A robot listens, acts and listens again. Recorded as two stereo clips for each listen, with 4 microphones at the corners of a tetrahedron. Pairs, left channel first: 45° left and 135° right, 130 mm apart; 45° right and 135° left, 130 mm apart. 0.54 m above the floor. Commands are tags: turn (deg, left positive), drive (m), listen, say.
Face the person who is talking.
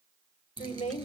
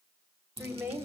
<turn deg="65"/>
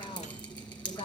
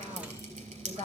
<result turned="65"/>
<turn deg="10"/>
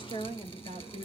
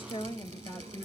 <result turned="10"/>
<say>Facing the woman speaking, 1 to 2 m away.</say>